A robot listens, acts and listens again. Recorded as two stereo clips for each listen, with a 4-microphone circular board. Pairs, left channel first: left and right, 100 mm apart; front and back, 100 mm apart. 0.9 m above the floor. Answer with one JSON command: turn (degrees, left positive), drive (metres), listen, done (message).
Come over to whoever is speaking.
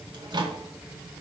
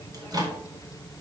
{"listen": true}
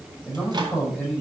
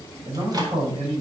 {"turn": 165}
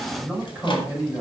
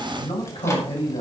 {"drive": 1.0}
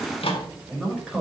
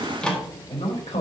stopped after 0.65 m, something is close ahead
{"done": "Blocked. The man speaking is further on, straight ahead."}